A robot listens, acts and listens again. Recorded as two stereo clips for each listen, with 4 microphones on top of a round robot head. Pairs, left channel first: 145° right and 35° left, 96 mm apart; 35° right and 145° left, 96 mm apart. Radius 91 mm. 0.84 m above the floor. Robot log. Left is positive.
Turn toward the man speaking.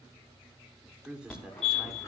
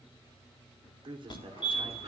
note: The man speaking: 115° left.
cmd yaw +115
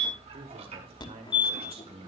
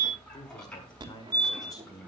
note: The man speaking is now 20° left.
cmd yaw +20
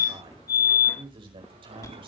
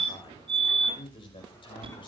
end: Found it: a man speaking, straight ahead, over 4 m away.